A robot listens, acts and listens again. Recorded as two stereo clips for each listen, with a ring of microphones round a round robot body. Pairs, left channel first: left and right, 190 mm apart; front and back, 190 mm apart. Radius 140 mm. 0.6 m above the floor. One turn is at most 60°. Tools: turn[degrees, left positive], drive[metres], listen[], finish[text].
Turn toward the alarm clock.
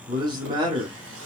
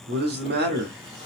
Action: listen[]
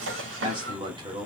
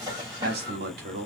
Action: listen[]
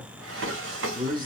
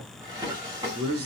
Action: finish[I can't make out an alarm clock, only a man speaking and a drawer.]